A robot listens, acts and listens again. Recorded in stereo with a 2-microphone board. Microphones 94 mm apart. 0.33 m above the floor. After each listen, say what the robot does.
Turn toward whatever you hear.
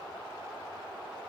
Keep listening.
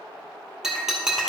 Turn 30° right.
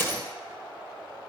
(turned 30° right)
Turn 25° left.
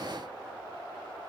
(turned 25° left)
I heard breaking glass from this way, but can't make it out now.